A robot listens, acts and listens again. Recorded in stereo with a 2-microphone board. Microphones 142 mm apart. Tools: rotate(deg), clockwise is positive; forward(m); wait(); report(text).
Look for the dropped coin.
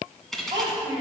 rotate(-30)
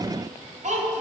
wait()
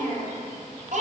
report("I heard a dropped coin, but can't make it out now. It was about 30° right or 150° left.")